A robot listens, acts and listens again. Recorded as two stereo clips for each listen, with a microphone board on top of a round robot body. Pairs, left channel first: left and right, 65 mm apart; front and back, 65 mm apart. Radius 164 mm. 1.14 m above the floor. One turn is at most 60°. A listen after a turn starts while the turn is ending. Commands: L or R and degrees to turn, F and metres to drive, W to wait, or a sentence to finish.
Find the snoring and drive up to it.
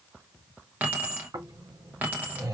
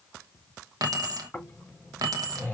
R60
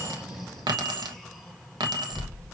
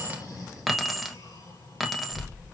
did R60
F1.0
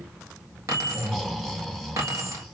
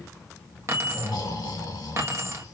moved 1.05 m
F1.0
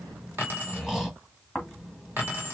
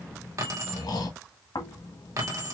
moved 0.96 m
R10
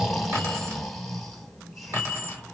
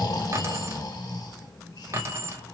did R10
F1.0
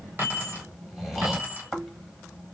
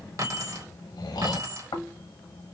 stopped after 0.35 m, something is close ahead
I am next to the snoring.